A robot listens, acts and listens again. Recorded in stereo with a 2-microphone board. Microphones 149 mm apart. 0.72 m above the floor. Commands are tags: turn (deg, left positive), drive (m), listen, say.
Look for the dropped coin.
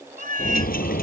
<turn deg="90"/>
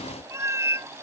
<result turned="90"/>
<say>Facing where the dropped coin came from. I can't hear it now.</say>